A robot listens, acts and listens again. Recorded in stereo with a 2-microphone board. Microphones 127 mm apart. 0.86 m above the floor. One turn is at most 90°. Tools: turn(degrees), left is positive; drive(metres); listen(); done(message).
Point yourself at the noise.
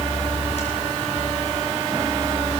listen()
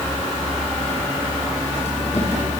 listen()
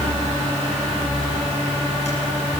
done("I can't make out anything to turn to.")